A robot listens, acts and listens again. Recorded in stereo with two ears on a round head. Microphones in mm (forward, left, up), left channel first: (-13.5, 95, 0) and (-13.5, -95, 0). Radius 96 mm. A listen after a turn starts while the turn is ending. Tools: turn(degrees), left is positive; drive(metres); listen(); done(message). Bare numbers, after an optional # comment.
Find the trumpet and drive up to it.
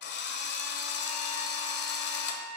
# The trumpet: about 40° left or 140° left.
turn(40)
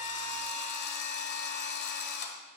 listen()
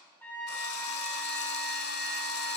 # So it is at 10° left.
turn(10)
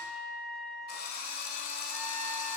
drive(1.0)
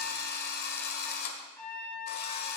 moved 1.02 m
# The trumpet is now 10° left.
turn(10)
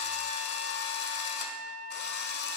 drive(1.0)
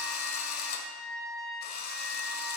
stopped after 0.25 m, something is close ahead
done("I am next to the trumpet.")